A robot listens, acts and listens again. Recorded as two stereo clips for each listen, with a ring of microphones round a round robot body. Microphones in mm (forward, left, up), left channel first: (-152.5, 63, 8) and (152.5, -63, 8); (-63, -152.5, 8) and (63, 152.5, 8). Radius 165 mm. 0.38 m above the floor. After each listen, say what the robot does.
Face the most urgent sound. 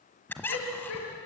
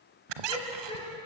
Turn 170° left.
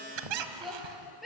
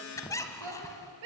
Turn 65° left.
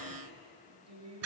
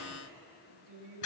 Turn 25° left.
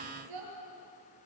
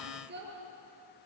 Facing the shout, over 4 m away.